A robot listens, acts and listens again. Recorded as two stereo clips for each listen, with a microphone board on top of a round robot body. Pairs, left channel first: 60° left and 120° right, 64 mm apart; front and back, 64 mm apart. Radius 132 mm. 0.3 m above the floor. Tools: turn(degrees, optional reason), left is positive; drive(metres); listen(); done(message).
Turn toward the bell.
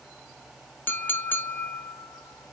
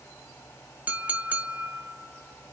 listen()
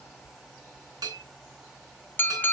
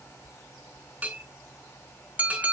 turn(degrees=-110, reason="The bell: 110° right.")
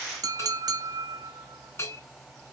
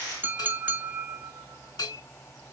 turn(degrees=15, reason="The bell is now 15° left.")
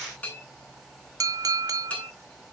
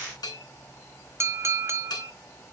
done("Found it: a bell, straight ahead, 2 to 4 m away.")